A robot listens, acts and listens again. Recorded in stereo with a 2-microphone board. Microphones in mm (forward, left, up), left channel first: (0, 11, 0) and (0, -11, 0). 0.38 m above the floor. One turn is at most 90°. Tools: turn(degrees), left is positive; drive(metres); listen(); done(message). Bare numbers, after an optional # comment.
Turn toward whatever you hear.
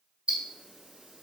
# The ticking: about 60° right or 120° right.
turn(-60)
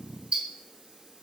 # So it is at 55° right.
turn(-55)
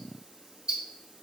# The ticking is now 40° right.
turn(-40)
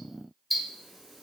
done("Facing the ticking.")